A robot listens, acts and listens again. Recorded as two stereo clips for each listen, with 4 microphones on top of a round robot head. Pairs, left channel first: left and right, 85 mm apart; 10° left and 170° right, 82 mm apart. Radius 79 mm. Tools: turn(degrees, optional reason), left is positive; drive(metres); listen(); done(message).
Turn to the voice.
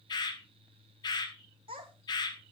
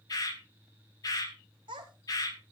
turn(degrees=-125, reason="The child speaking: 125° right.")
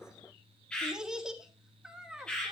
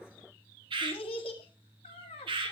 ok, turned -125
turn(degrees=-10, reason="The child speaking is now 10° right.")
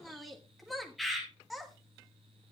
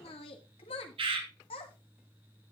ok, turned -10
done("Facing the child speaking, 1 to 2 m away.")